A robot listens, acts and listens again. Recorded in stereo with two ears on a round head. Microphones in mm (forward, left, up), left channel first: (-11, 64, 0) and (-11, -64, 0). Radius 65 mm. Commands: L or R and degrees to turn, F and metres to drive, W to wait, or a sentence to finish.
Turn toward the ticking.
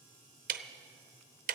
R65
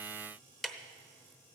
Found it: ticking, straight ahead.